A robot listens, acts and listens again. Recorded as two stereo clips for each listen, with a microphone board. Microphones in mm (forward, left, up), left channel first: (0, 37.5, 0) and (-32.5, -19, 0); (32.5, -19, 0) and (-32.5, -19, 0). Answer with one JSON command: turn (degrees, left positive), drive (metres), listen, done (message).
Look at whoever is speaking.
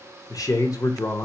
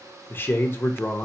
{"turn": 50}
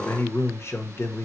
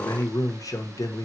{"turn": 15}
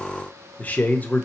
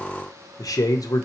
{"done": "Found it: a man speaking, straight ahead, under 1 m away."}